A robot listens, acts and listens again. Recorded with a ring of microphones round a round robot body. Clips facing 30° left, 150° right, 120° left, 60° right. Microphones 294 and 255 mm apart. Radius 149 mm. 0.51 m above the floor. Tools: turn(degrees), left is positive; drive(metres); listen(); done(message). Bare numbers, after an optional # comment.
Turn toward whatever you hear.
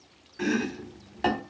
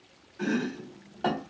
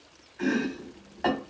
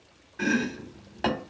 # The chopping: 20° right.
turn(-20)
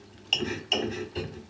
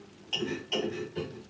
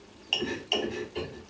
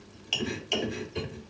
done("Facing the chopping.")